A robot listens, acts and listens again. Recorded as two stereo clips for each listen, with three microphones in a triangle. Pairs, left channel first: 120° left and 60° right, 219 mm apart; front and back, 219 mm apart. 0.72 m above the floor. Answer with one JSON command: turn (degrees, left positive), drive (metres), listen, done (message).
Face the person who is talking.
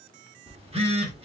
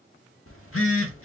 {"listen": true}
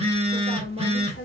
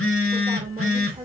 {"turn": 120}
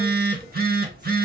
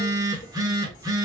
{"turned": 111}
{"turn": 10}
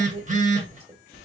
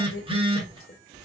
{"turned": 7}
{"done": "Found it: a woman speaking, straight ahead."}